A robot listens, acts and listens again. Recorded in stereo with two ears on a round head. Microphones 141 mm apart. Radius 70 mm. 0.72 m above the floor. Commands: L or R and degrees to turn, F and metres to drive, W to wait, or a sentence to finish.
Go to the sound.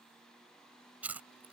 R30
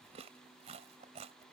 R140
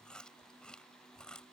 F1.0
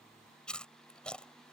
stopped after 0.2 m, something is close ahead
Blocked. The chewing is further on, straight ahead.